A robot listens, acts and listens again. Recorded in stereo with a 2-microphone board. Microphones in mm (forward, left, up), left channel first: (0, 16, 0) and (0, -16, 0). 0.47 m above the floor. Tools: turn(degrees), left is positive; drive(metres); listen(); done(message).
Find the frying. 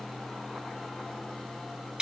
listen()
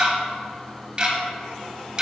listen()
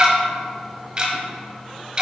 done("I can't make out frying to turn to.")